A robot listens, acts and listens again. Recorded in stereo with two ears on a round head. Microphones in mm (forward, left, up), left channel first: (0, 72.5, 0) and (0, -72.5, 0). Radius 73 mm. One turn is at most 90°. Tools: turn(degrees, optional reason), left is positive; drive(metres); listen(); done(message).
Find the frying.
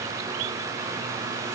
listen()
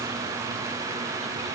listen()
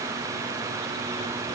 done("I can't make out frying.")